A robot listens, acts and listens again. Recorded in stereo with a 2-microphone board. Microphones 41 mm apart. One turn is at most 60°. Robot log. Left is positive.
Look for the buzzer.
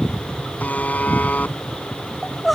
note: The buzzer: about 40° left or 140° left.
cmd yaw +40
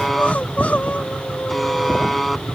end: Facing the buzzer.